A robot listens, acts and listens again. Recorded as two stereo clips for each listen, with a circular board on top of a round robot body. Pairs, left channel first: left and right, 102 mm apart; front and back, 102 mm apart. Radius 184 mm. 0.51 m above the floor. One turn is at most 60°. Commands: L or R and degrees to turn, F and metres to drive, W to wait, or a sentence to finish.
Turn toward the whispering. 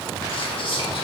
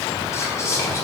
L60
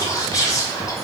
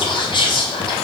L35
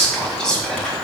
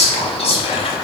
Facing the whispering.